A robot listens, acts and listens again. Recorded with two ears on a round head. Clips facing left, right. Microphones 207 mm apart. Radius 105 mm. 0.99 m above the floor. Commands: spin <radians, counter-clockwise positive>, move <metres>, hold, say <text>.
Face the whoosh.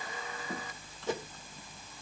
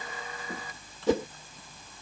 spin -1.13
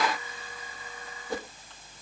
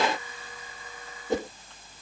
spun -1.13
spin -0.44
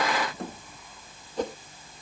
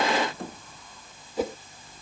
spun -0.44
say Facing the whoosh.